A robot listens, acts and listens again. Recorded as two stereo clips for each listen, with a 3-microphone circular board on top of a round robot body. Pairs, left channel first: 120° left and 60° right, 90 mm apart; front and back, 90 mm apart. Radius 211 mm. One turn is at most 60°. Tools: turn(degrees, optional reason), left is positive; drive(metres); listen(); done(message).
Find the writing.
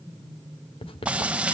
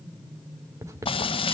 turn(degrees=60, reason="The writing: 125° left.")
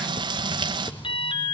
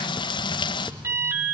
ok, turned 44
turn(degrees=60, reason="Nothing new. It was at 80° left.")
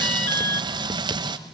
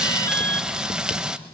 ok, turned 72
turn(degrees=10, reason="Nothing new. It was at 10° left.")
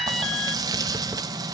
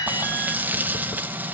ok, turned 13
done("Facing where the writing came from. I can't hear it now.")